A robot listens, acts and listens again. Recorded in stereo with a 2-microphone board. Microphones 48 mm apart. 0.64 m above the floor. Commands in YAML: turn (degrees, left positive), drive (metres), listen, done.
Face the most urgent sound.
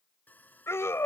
turn: 65
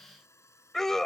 turn: 10
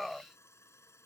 done: "Facing the scream."